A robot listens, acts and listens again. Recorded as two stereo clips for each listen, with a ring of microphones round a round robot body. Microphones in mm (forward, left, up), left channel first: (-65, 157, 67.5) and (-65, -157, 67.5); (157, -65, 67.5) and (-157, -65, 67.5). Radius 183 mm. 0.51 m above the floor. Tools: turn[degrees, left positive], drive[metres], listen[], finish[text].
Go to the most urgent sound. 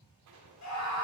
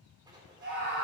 Thought: The scream: 120° left.
Action: turn[120]
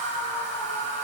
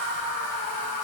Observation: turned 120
Thought: The scream is now 25° left.
Action: turn[25]
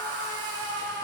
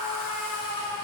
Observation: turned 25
Thought: The scream is now 15° left.
Action: turn[15]
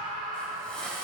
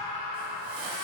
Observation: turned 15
Action: drive[1.0]
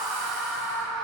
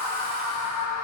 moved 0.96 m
Action: drive[1.0]
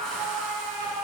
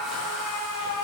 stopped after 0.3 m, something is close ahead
Action: finish[Arrived at the scream, straight ahead.]